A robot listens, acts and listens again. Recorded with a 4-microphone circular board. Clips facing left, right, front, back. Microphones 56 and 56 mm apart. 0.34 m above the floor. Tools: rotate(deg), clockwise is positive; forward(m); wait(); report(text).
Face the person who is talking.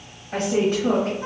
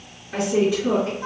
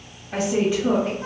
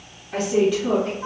rotate(-65)
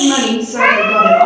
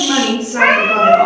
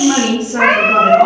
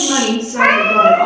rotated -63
report("Found it: a woman speaking, straight ahead, 1 to 2 m away.")